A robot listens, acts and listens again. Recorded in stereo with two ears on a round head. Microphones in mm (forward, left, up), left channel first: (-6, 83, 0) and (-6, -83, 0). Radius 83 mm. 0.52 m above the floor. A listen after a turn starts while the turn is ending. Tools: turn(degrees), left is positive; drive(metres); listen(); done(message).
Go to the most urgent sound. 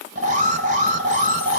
turn(degrees=-45)
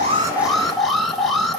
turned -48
drive(metres=1.0)
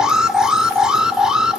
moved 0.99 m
drive(metres=1.0)
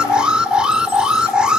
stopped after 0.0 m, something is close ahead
done("I am next to the alarm.")